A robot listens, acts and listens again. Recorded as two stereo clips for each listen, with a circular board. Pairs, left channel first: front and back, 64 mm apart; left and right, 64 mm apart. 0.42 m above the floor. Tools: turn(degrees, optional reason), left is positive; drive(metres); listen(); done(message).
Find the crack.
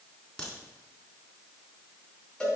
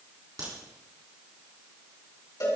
turn(degrees=-80, reason="The crack: 80° right.")
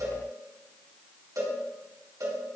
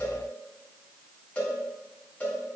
done("Facing where the crack came from. I can't hear it now.")